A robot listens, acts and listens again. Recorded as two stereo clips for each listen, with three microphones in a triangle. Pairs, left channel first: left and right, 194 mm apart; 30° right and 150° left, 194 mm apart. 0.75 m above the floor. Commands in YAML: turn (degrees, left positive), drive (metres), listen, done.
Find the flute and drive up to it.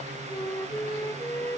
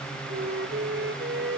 turn: 165
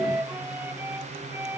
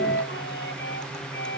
turn: -10
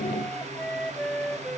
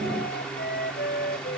drive: 1.0
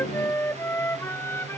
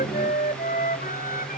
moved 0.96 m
turn: 10
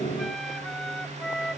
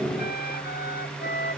drive: 1.0
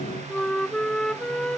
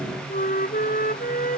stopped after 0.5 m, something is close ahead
done: "Arrived at the flute, straight ahead."